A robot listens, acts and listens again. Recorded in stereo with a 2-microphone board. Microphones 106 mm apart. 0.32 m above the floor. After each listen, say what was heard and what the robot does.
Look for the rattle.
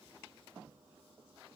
Keep listening.
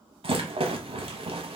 The rattle: about 65° right or 115° right. Turn 65° right.
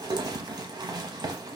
So it is at 45° right. Turn 45° right.
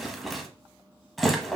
Facing the rattle.